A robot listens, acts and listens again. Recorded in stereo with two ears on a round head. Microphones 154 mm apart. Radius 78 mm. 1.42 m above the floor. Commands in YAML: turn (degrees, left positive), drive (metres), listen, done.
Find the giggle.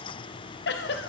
turn: 65
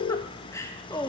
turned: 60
turn: 20
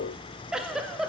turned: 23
done: "Facing the giggle."